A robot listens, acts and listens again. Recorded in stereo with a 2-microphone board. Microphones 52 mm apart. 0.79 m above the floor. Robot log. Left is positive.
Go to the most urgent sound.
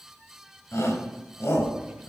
note: The shout: about 60° left or 120° left.
cmd yaw +60
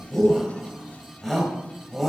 cmd fwd 1.0
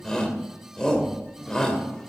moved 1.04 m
note: The shout is now 10° left.
cmd yaw +10
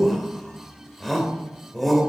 cmd fwd 1.0
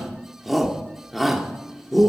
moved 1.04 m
cmd fwd 1.0
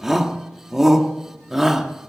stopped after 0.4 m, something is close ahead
note: The shout is now 10° right.
cmd yaw -10
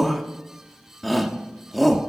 end: Arrived at the shout, straight ahead.